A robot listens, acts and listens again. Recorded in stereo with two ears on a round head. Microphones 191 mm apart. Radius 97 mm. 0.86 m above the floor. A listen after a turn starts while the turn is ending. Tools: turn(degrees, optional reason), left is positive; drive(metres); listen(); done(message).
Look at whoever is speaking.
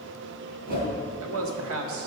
turn(degrees=-70, reason="The man speaking: about 70° right or 110° right.")
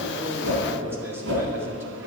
listen()
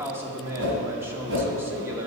turn(degrees=-10, reason="So it is at 10° right.")
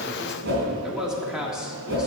done("Facing the man speaking, 1 to 2 m away.")